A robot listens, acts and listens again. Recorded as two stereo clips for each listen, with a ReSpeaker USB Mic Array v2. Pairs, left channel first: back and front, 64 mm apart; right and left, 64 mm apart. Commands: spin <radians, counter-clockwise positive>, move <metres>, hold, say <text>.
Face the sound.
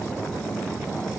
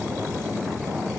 hold
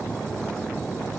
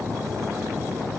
hold
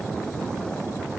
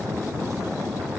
say I can't make out anything to turn to.